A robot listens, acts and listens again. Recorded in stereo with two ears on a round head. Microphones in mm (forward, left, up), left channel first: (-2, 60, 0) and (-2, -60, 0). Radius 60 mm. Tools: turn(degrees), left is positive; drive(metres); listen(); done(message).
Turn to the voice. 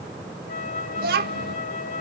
turn(degrees=-90)
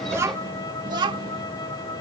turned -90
turn(degrees=-35)
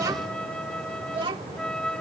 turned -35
turn(degrees=-40)
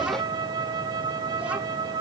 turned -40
listen()
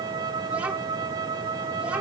listen()
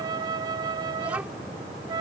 done("Facing where the child speaking came from. I can't hear it now.")